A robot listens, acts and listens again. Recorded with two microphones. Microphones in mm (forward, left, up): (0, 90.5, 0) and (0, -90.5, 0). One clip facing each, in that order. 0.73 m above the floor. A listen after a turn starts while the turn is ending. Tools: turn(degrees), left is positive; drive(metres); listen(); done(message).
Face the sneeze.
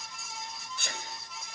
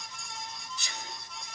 turn(degrees=55)
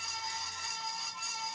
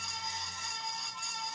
listen()
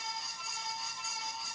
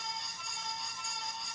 done("I heard a sneeze, but can't make it out now. It was about straight ahead or 70° left.")